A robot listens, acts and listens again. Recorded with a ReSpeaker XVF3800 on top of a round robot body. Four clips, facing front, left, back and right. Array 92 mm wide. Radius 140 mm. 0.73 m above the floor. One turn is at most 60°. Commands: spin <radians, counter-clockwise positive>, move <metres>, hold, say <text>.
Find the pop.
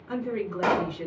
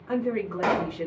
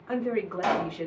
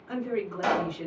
spin 0.79
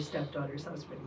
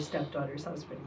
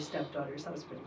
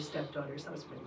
say Facing where the pop came from. I can't hear it now.